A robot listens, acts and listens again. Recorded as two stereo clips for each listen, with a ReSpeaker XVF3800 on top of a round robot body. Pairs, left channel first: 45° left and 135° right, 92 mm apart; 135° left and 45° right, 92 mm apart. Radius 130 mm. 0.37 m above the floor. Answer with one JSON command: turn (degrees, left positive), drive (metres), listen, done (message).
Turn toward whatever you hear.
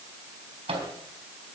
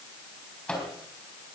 {"turn": -150}
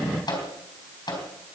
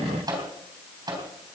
{"done": "Facing the microwave, 2 to 4 m away."}